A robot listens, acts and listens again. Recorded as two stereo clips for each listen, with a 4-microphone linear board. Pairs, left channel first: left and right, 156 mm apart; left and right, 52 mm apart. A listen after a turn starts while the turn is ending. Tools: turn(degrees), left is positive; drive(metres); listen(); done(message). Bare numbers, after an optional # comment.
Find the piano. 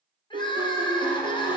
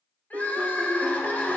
# The piano: about 55° right or 125° right.
turn(-55)
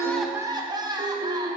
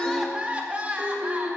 # So it is at 60° right.
turn(-60)
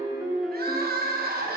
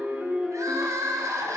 done("Facing the piano, 1 to 2 m away.")